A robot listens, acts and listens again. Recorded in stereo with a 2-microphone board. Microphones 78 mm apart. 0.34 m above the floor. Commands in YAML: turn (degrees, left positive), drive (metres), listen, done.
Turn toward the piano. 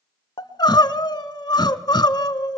listen: true
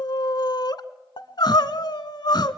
listen: true
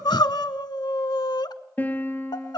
turn: 25
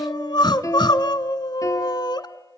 turn: 135
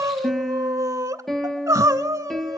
done: "Found it: a piano, straight ahead, 1 to 2 m away."